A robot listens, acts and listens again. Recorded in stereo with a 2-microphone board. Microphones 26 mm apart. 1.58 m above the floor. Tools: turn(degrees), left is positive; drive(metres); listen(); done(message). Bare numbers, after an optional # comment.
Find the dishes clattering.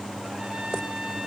listen()
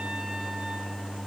listen()
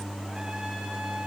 done("I can't make out dishes clattering.")